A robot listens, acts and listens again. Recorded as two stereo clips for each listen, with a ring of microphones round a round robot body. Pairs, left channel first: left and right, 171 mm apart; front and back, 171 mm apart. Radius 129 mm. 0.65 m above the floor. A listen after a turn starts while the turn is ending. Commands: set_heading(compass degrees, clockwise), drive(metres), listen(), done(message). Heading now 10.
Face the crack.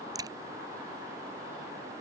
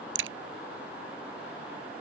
set_heading(175)
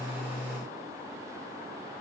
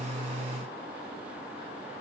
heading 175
done("Facing where the crack came from. I can't hear it now.")